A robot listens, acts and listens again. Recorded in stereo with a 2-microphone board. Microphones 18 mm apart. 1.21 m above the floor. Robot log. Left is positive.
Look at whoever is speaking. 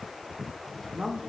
note: The woman speaking: about 55° right or 125° right.
cmd yaw -55
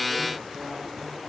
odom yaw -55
cmd idle
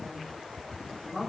note: So it is at 30° right.
cmd yaw -30
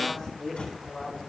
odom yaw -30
end: Facing the woman speaking, 2 to 4 m away.